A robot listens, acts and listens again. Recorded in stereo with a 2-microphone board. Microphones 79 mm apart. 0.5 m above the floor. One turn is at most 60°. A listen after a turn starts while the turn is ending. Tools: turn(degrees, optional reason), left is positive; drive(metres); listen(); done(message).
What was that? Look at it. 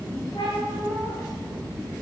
turn(degrees=60)
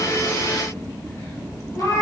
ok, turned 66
turn(degrees=45, reason="So it is at 45° left.")
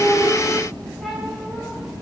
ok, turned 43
done("Facing the cat meowing.")